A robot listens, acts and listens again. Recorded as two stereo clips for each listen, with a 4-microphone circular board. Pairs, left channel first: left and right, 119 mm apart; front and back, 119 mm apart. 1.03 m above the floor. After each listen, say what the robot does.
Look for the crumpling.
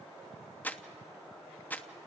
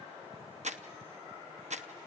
Turn 165° left.
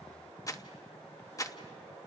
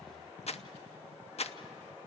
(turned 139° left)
Turn 30° left.
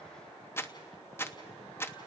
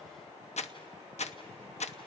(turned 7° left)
Turn 20° left.
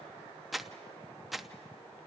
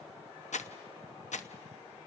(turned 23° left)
Facing the crumpling.